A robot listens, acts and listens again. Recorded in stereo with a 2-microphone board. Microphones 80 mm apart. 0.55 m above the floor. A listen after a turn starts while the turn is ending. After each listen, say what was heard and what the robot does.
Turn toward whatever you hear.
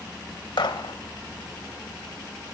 Turn 90° left.
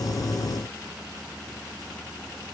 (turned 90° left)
I heard a gunshot from this way, but can't make it out now.